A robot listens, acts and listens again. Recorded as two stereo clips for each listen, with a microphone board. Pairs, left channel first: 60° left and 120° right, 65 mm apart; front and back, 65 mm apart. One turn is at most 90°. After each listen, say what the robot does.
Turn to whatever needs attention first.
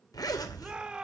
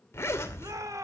Turn 90° left.
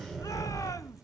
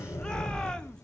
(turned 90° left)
Turn 75° left.
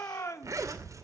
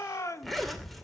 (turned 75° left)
Turn 30° left.
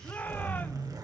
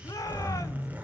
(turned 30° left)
Found it: a shout, straight ahead, 1 to 2 m away.